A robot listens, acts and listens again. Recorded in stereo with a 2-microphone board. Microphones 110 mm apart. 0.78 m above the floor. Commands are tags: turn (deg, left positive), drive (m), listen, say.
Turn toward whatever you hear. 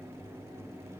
<listen/>
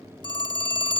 <turn deg="45"/>
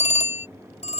<turn deg="90"/>
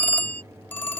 <turn deg="15"/>
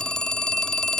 <say>Facing the phone ringing.</say>